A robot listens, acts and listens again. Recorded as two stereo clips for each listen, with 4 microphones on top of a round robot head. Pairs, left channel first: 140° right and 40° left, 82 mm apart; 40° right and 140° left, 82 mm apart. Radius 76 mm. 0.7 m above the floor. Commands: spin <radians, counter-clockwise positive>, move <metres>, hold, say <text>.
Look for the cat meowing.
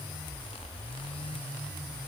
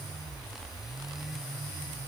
hold
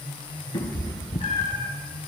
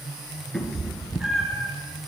spin -2.36
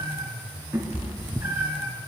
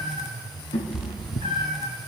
spin -0.52
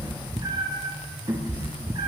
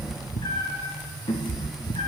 say Found it: a cat meowing, straight ahead, 1 to 2 m away.